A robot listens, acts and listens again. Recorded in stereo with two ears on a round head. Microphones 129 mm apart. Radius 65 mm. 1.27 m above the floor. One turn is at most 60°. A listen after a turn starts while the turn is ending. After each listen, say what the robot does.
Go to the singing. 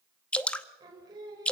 Turn 30° right.
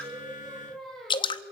Drive 1.0 m forward.
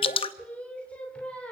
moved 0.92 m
Turn 10° left.
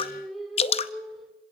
Drive 1.0 m forward.
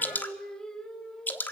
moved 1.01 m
Drive 1.0 m forward.
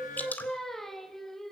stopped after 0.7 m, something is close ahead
I am next to the singing.